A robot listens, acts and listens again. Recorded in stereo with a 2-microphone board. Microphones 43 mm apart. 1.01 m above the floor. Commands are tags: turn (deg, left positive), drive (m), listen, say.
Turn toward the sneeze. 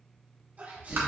<turn deg="-40"/>
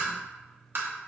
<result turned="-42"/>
<listen/>
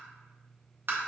<say>I heard a sneeze, but can't make it out now. It was about straight ahead or 95° right.</say>